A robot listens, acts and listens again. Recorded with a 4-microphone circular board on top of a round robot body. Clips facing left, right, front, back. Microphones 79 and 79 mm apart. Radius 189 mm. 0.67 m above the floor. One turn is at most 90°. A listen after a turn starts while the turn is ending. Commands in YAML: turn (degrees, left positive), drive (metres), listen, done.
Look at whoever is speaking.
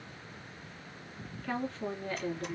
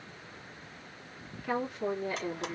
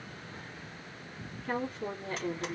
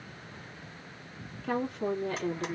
turn: -90
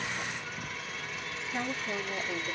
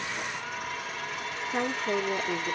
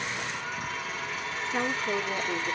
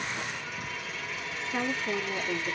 turn: -90
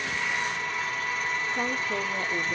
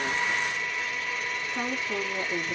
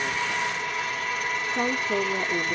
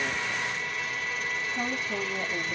turn: -25
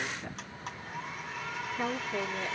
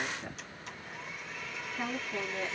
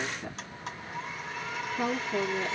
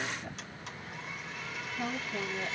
turn: -10
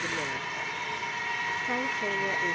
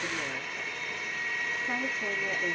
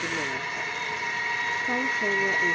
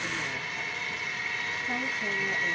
listen: true
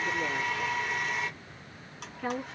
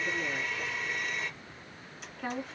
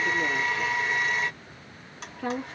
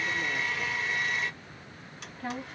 done: "Facing the woman speaking."